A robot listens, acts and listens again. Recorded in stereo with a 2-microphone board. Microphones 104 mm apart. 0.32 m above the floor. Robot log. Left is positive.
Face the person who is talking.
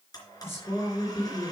note: The woman speaking: about 25° left or 155° left.
cmd yaw +25
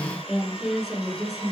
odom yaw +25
end: Found it: a woman speaking, straight ahead, over 4 m away.